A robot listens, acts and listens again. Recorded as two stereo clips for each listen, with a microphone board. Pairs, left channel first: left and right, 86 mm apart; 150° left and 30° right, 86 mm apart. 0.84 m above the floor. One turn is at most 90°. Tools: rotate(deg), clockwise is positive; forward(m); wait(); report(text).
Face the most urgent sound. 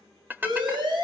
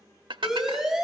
rotate(90)
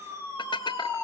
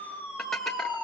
rotate(30)
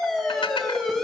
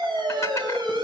report("Found it: a siren, straight ahead, over 4 m away.")